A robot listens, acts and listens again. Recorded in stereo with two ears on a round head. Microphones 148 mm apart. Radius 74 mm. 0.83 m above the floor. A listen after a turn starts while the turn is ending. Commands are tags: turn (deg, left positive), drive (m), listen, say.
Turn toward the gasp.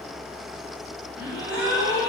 <turn deg="-15"/>
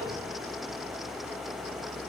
<listen/>
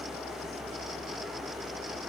<say>I heard a gasp, but can't make it out now. It was about straight ahead or 150° right.</say>